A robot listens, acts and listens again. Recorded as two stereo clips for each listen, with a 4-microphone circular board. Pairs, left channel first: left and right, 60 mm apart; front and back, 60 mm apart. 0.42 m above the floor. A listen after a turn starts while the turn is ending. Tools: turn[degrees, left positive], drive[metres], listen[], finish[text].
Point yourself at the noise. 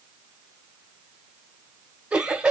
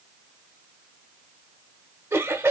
Thought: The laughter: 160° right.
Action: turn[-160]
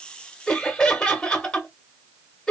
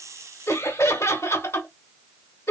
Thought: The laughter is now 15° left.
Action: turn[15]
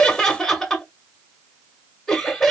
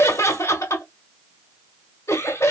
Action: finish[Found it: laughter, straight ahead.]